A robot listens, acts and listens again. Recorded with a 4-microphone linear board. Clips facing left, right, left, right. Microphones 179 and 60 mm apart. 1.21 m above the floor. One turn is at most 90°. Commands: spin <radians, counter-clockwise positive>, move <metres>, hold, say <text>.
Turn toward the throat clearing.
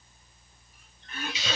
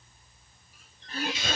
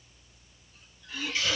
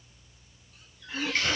spin -0.61
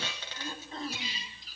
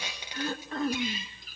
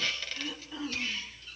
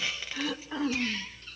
spin -1.57
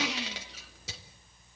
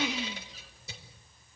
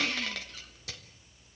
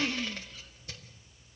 spin -0.35
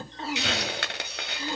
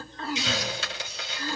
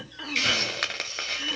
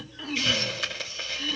spin 0.35
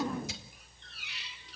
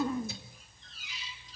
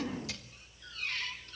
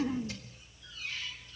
say Facing the throat clearing.